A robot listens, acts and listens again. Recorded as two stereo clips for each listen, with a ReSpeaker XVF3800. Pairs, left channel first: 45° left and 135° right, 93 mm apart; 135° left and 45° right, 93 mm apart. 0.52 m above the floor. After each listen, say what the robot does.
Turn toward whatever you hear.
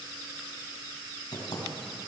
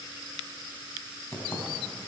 Turn 70° left.
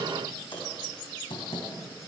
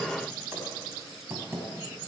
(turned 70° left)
Turn 20° left.
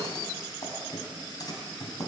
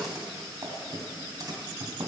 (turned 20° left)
Found it: typing on a keyboard, straight ahead, 2 to 4 m away.